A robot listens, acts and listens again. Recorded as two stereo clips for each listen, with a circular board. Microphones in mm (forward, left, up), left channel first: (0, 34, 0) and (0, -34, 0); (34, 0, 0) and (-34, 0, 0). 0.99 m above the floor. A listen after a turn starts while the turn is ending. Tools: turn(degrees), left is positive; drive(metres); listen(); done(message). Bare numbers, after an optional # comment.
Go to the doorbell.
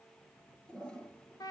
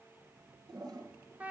listen()
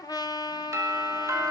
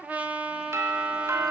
# The doorbell: 140° right.
turn(-140)
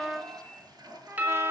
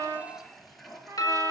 # The doorbell is now 30° right.
turn(-30)
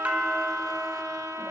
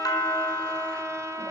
# The doorbell is now 20° right.
turn(-20)
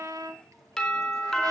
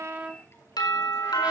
drive(1.0)
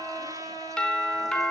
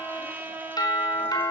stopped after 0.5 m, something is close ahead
done("Something is in my way. I am facing the doorbell but have not reached it.")